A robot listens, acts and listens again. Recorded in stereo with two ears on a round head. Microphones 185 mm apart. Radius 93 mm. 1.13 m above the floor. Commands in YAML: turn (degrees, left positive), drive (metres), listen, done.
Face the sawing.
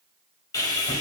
turn: 20
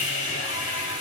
turn: 140
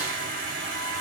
turn: -40
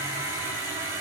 turn: -15
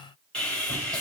done: "Found it: sawing, straight ahead, 2 to 4 m away."